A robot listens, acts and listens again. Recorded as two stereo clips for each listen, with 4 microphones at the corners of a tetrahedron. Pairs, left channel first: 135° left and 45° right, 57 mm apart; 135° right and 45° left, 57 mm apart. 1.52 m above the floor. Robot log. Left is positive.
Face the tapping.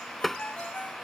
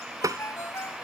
note: The tapping: 45° left.
cmd yaw +45
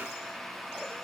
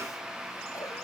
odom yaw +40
cmd idle
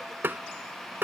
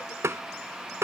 end: Found it: tapping, straight ahead.